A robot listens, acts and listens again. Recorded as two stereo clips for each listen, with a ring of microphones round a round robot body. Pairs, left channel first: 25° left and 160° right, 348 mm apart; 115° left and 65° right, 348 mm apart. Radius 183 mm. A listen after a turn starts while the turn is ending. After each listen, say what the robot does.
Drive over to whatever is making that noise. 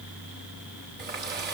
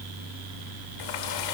Turn 140° left.
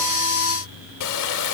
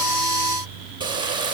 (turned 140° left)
Turn 10° left.
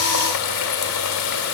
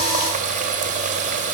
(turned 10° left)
Drive 1.0 m forward.
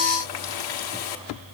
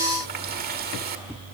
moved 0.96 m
Drive 1.0 m forward.
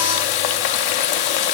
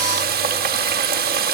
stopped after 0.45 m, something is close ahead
I am next to the running tap.